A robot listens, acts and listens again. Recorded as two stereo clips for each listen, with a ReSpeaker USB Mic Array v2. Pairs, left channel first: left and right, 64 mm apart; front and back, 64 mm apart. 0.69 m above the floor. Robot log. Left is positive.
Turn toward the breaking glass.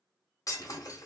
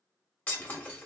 note: The breaking glass: 65° left.
cmd yaw +65
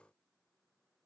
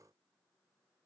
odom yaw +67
end: Facing where the breaking glass came from. I can't hear it now.